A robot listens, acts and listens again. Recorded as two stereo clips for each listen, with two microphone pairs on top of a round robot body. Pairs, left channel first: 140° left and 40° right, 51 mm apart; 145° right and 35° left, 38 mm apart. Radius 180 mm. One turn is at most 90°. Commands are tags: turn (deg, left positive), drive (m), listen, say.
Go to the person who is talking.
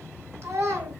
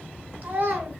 <drive m="1.0"/>
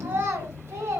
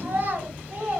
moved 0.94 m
<turn deg="-10"/>
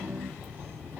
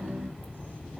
<listen/>
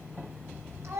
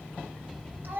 <drive m="1.0"/>
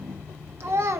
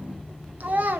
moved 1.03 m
<turn deg="-10"/>
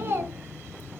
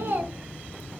<drive m="1.0"/>
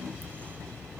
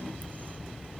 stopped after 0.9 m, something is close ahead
<listen/>
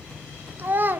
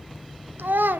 <turn deg="10"/>
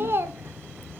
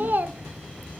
<say>Arrived at the child speaking, straight ahead.</say>